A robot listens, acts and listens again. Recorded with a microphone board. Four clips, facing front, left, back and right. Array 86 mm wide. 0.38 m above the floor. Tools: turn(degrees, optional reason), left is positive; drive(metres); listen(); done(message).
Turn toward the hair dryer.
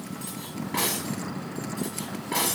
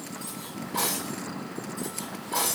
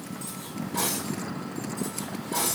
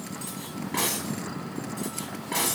listen()
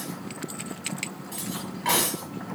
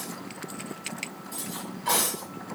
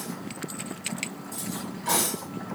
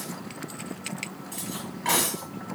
listen()
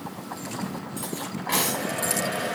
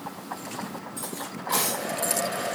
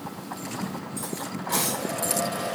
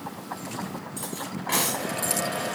turn(degrees=-10, reason="The hair dryer: 10° right.")
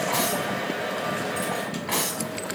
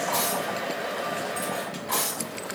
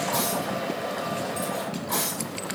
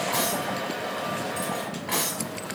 done("Found it: a hair dryer, straight ahead.")